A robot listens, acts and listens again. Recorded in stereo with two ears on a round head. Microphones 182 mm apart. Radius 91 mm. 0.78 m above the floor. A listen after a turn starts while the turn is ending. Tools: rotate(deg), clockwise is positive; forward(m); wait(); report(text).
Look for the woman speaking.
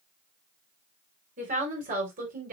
rotate(45)
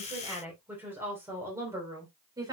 rotate(20)
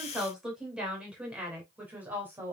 rotate(10)
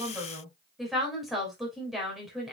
report("Found it: a woman speaking, straight ahead.")